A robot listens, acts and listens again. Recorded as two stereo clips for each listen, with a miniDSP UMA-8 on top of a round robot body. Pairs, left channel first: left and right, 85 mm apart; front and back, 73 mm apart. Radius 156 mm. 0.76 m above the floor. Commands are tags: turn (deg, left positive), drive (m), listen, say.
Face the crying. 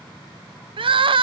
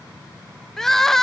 <turn deg="-85"/>
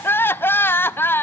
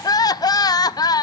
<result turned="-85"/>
<turn deg="25"/>
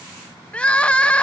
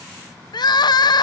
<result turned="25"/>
<turn deg="15"/>
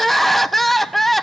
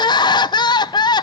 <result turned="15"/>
<say>Found it: crying, straight ahead, under 1 m away.</say>